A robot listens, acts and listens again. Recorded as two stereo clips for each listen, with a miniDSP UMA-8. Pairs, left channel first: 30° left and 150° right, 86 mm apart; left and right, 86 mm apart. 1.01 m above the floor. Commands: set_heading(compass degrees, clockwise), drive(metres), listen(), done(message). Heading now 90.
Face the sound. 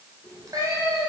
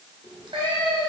set_heading(190)
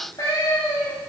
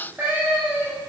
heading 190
set_heading(210)
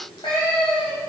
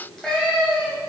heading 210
done("Facing the cat meowing, 2 to 4 m away.")